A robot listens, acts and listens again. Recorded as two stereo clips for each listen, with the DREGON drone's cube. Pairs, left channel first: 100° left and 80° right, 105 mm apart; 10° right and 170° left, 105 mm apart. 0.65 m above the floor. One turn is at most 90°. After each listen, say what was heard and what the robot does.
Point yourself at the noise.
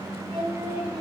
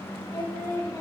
The singing: 65° right. Turn 65° right.
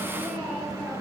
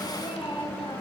Facing the singing.